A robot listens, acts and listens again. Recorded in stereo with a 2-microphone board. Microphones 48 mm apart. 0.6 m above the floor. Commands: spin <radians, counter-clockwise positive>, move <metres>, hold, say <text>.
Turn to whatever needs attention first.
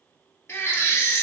spin 1.13
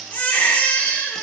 spin 0.70
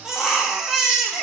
spin -0.17
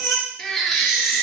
say Facing the baby crying.